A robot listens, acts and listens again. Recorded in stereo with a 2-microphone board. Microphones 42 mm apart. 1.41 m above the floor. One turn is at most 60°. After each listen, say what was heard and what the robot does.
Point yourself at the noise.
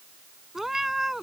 Turn 30° right.
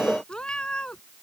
So it is at 20° left. Turn 20° left.
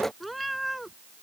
Facing the cat meowing.